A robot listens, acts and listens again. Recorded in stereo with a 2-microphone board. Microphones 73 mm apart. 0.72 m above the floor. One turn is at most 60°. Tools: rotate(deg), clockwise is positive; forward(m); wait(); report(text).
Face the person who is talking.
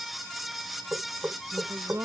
rotate(40)
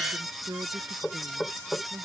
rotate(60)
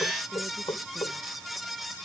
rotate(35)
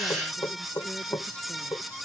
wait()
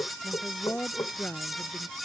rotate(-15)
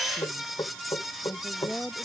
report("Facing the woman speaking.")